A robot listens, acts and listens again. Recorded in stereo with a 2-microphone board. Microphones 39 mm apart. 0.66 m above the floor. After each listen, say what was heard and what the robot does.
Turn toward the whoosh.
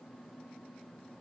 Keep listening.
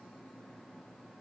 Keep listening.
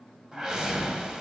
The whoosh: about 20° right or 160° right. Turn 20° right.
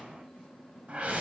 So it is at 140° right. Turn 140° right.
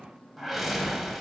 Facing the whoosh.